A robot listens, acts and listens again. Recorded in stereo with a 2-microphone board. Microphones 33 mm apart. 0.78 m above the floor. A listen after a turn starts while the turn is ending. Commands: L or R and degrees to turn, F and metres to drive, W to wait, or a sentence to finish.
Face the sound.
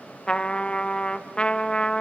L30
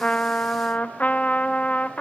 L115
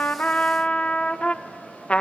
L50
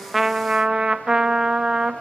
R20
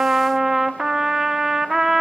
Facing the trumpet.